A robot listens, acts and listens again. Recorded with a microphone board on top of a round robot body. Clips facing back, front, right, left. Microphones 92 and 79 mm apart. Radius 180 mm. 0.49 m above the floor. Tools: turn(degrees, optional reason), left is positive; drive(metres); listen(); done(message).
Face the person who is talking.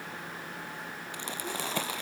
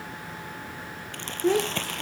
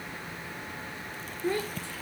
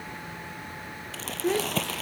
turn(degrees=20, reason="The child speaking: 20° left.")
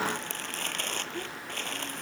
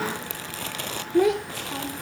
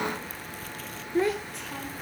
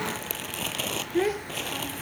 done("Facing the child speaking.")